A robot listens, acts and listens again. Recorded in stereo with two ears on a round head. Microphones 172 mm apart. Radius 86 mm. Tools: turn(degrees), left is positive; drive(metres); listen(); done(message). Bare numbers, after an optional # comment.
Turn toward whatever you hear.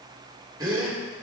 # The gasp: about 20° right or 160° right.
turn(-20)
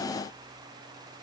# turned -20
listen()
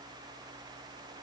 done("I heard a gasp, but can't make it out now. It was about straight ahead or 140° right.")